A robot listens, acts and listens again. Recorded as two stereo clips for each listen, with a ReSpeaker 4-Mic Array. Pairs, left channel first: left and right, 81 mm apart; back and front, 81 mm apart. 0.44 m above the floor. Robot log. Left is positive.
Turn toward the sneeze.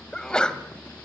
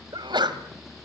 note: The sneeze: 10° left.
cmd yaw +10
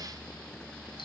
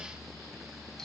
end: I heard a sneeze from this way, but can't make it out now.